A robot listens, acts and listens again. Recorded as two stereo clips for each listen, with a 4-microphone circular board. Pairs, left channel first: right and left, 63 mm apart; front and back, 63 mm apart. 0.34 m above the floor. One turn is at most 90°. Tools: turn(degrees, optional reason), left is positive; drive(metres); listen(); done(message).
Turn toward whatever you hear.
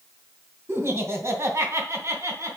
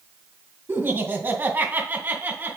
turn(degrees=90, reason="The laughter: 120° left.")
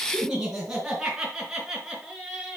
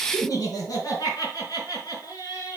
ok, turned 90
done("Facing the laughter, over 4 m away.")